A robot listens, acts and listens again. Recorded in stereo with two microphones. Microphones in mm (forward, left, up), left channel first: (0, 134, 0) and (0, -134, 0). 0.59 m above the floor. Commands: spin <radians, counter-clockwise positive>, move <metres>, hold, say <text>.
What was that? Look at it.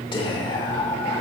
spin 0.35
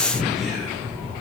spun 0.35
say Found it: whispering, straight ahead.